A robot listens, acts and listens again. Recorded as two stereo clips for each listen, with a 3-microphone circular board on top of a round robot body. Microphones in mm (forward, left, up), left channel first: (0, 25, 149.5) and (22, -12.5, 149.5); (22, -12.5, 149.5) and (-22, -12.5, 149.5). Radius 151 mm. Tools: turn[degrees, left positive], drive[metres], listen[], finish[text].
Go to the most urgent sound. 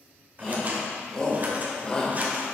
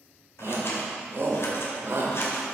Thought: The shout: 170° right.
Action: turn[-170]
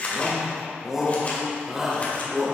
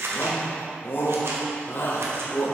Thought: The shout is now 20° left.
Action: turn[20]
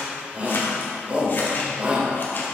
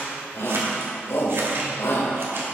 Action: drive[1.0]
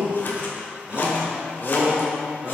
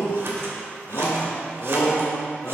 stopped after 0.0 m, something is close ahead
Action: finish[Something is in my way. I am facing the shout but have not reached it.]